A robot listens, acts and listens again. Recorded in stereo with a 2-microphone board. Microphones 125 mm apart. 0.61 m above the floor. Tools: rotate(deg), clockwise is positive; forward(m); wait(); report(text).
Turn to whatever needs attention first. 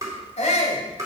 rotate(-65)
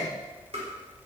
wait()
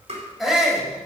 report("Found it: a shout, straight ahead.")